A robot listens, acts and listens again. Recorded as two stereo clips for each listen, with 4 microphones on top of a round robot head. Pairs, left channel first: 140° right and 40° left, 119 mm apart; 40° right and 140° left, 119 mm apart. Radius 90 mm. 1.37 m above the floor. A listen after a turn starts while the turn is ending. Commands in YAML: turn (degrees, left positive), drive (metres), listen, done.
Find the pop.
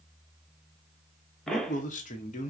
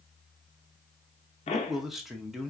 turn: -55
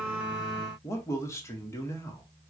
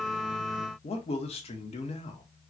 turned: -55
done: "I heard a pop from this way, but can't make it out now."